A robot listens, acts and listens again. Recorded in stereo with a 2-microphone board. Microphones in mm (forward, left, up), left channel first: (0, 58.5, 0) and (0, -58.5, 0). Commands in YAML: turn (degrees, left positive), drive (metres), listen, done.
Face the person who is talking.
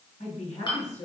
turn: 70
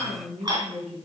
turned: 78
done: "Found it: a woman speaking, straight ahead, over 4 m away."